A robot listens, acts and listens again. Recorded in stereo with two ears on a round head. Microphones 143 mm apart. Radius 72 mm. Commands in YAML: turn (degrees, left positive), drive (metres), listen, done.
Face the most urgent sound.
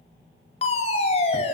turn: 40
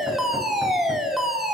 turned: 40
done: "Found it: a fire alarm, straight ahead, over 4 m away."